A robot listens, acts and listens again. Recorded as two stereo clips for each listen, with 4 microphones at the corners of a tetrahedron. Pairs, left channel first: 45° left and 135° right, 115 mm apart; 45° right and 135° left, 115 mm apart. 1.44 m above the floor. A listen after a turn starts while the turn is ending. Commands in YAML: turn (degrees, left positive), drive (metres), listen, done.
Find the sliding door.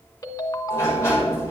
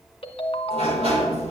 turn: 110
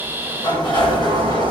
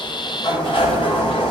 done: "Found it: a sliding door, straight ahead."